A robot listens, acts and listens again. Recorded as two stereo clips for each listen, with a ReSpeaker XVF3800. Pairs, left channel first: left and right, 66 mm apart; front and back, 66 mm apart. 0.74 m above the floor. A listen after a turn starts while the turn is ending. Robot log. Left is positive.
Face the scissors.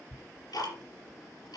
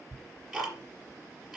cmd idle
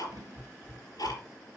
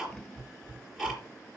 cmd idle
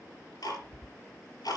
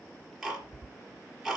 end: I can't make out scissors, only ticking.